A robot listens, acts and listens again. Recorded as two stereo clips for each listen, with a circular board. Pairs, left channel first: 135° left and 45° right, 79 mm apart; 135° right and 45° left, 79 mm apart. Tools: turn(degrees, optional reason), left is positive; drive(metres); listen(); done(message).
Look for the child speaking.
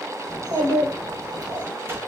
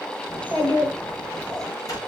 turn(degrees=-60, reason="The child speaking: 60° right.")
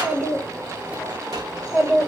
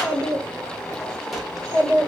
turn(degrees=35, reason="The child speaking is now 35° left.")
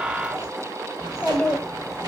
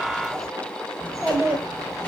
turn(degrees=55, reason="The child speaking is now 55° left.")
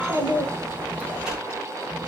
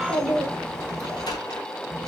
done("Facing the child speaking.")